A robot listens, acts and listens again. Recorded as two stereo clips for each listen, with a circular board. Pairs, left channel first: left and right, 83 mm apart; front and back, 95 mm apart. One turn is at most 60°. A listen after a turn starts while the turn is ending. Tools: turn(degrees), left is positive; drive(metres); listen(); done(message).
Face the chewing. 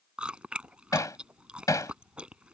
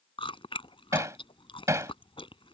turn(degrees=-15)
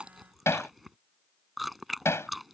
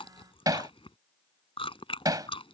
done("Facing the chewing.")